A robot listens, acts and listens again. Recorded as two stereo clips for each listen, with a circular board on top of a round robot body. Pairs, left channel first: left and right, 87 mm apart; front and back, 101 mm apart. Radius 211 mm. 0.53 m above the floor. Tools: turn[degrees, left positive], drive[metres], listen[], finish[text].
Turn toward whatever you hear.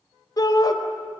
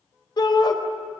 Thought: The shout: 45° left.
Action: turn[45]
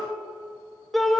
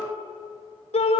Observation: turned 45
Action: finish[Found it: a shout, straight ahead.]